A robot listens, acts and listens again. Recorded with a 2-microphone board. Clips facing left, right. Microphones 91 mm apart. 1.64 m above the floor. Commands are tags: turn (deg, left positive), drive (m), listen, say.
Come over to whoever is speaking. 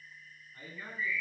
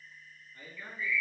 <turn deg="35"/>
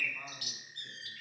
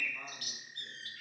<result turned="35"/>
<listen/>
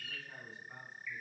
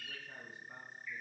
<drive m="1.0"/>
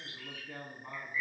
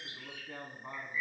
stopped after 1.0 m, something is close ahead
<turn deg="-10"/>
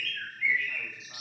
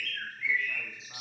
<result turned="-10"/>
<listen/>
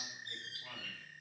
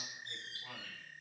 <listen/>
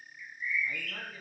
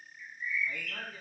<say>I heard a man speaking from this way, but can't make it out now. I did not reach it.</say>